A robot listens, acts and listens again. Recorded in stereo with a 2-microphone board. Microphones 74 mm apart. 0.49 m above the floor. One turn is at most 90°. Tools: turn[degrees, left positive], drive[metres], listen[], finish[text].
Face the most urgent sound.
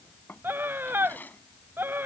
Thought: The scream: about 30° right or 150° right.
Action: turn[-30]
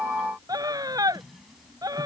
Thought: So it is at 125° right.
Action: turn[-90]
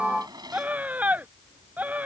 Thought: The scream is now 20° right.
Action: turn[-20]
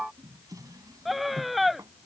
Action: finish[Found it: a scream, straight ahead.]